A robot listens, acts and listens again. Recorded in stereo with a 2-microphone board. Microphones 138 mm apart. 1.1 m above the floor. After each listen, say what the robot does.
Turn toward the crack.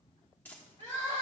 Keep listening.
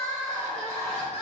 Keep listening.
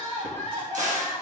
Turn 60° right.
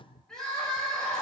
Keep listening.
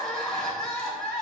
I heard a crack, but can't make it out now. It was about straight ahead or 60° right.